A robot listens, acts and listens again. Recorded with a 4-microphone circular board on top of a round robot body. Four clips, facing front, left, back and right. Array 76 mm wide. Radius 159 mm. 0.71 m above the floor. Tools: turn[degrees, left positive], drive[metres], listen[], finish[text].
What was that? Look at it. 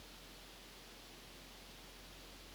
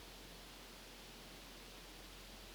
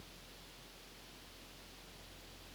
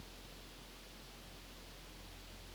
Action: listen[]
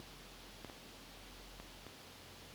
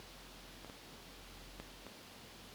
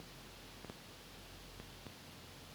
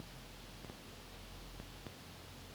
Action: listen[]
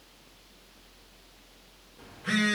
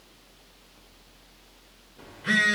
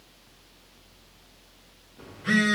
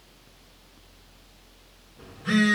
Thought: The phone buzzing: 110° left.
Action: turn[110]
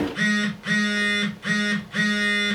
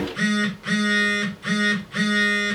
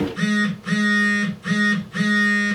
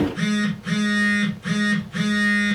Thought: The phone buzzing is now 30° left.
Action: turn[30]
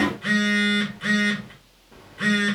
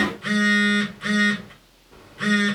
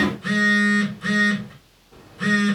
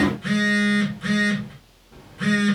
Thought: The phone buzzing is now 20° left.
Action: turn[20]
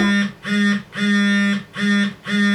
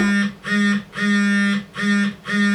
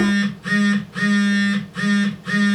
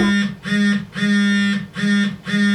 Action: finish[Found it: a phone buzzing, straight ahead.]